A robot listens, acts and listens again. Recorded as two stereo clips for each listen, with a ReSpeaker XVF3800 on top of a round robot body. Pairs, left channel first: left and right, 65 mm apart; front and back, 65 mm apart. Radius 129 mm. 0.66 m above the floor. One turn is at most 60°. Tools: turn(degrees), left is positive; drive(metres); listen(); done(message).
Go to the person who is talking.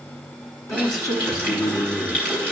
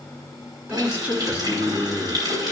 turn(degrees=60)
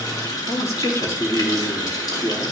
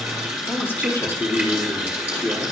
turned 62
turn(degrees=55)
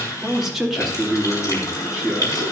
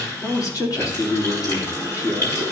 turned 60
drive(metres=1.0)
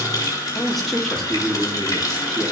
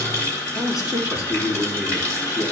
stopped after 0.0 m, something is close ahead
done("Blocked. The man speaking is further on, straight ahead.")